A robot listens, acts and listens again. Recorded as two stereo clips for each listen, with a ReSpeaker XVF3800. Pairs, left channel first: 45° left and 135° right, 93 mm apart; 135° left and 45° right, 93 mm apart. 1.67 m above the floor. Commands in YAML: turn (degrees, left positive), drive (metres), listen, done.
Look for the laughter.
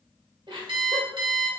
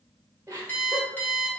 turn: -110
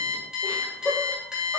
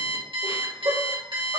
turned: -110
turn: -35
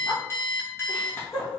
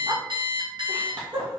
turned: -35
turn: -15
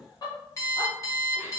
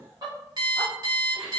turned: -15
done: "Found it: laughter, straight ahead, 2 to 4 m away."